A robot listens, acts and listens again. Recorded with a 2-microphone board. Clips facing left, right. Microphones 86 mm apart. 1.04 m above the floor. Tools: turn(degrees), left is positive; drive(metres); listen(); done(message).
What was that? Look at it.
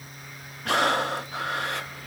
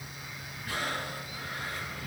turn(degrees=90)
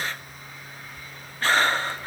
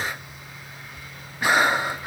turn(degrees=-15)
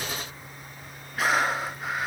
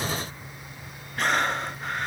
done("Facing the breathing, under 1 m away.")